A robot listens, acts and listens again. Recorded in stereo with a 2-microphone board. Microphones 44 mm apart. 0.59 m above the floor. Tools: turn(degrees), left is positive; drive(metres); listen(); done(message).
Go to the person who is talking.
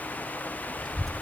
turn(degrees=30)
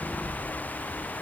turn(degrees=140)
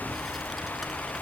drive(metres=1.0)
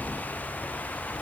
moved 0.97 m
listen()
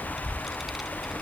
drive(metres=1.0)
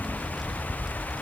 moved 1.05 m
drive(metres=1.0)
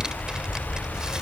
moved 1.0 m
turn(degrees=-20)
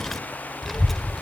drive(metres=1.0)
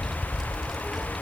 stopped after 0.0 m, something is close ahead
done("I am next to the child speaking.")